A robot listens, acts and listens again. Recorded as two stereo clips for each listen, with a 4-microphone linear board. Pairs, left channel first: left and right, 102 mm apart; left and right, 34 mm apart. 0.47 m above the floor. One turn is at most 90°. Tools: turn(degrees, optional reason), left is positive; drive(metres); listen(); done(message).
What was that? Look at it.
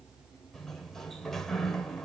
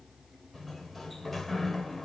turn(degrees=30)
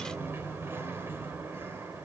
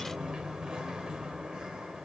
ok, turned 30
turn(degrees=-25, reason="So it is at 25° right.")
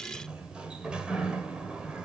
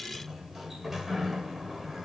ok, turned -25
turn(degrees=-10, reason="The sliding door is now 10° right.")
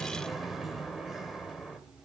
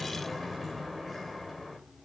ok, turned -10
done("Facing the sliding door, 2 to 4 m away.")